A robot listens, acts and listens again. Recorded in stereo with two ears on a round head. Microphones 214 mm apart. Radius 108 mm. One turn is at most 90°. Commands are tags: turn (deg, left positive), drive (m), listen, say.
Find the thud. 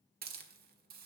<listen/>
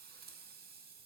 <listen/>
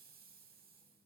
<say>I can't make out a thud, only a hiss.</say>